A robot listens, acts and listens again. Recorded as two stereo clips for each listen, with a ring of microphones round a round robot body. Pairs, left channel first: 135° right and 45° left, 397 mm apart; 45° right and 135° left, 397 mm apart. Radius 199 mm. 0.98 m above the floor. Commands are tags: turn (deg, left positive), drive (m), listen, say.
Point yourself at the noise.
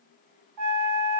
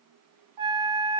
<turn deg="90"/>
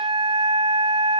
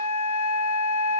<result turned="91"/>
<say>Found it: a flute, straight ahead.</say>